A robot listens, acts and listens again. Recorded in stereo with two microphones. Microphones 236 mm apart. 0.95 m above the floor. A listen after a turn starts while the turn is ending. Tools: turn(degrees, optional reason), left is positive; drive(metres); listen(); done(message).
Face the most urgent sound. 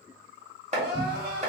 turn(degrees=-70, reason="The crying: about 70° right or 110° right.")
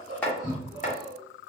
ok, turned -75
turn(degrees=-15, reason="So it is at 15° right.")
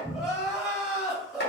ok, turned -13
done("Found it: crying, straight ahead, 1 to 2 m away.")